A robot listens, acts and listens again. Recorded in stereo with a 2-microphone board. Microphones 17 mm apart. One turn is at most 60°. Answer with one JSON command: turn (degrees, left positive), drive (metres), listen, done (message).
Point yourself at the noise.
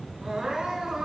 {"turn": -60}
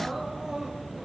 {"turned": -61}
{"turn": -25}
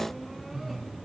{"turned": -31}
{"turn": 10}
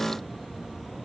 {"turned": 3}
{"listen": true}
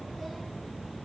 {"done": "I heard crying from this way, but can't make it out now."}